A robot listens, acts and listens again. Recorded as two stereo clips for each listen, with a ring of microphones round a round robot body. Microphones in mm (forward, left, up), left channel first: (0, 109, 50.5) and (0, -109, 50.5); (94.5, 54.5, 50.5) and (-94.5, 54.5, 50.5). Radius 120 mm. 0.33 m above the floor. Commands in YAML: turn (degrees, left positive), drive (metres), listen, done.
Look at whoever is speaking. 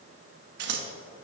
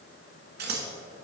listen: true
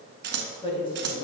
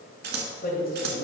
turn: 25
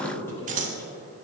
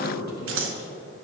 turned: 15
turn: 10
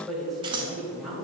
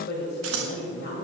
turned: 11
done: "Facing the woman speaking, 1 to 2 m away."